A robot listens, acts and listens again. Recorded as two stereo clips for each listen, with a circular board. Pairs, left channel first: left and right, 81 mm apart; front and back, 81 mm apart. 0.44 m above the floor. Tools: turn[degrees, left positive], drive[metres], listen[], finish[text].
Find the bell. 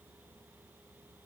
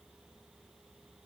Action: listen[]
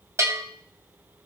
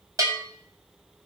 Thought: The bell: 140° right.
Action: turn[-140]
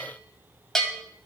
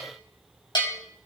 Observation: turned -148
Action: finish[Facing the bell.]